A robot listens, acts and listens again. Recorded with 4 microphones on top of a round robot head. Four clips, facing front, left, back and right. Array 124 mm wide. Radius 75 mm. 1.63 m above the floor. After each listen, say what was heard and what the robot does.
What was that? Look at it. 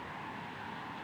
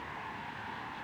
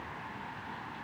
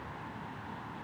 Keep listening.
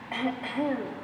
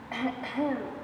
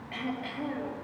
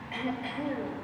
The throat clearing: 40° left. Turn 40° left.
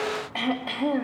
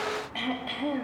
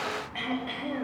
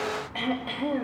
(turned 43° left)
Found it: throat clearing, straight ahead.